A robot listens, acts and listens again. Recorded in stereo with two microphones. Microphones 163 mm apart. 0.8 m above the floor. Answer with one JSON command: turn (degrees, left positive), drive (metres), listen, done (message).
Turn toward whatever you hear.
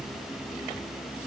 {"listen": true}
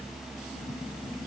{"listen": true}
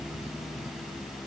{"done": "I can't make out anything to turn to."}